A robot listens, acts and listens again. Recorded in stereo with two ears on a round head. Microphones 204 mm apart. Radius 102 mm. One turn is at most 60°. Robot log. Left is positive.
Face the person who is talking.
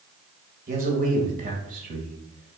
note: The man speaking: about 35° right or 145° right.
cmd yaw -35
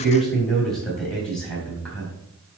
end: Facing the man speaking, 2 to 4 m away.